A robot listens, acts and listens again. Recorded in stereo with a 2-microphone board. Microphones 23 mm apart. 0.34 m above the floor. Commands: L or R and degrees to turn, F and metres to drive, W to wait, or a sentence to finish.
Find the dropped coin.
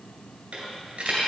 R55
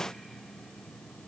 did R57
W
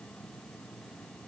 I heard a dropped coin, but can't make it out now. It was about straight ahead or 65° right.